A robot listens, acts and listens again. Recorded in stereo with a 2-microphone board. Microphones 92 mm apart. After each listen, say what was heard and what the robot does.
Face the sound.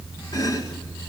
The chopping: about 45° left or 135° left. Turn 45° left.
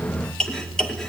Found it: chopping, straight ahead.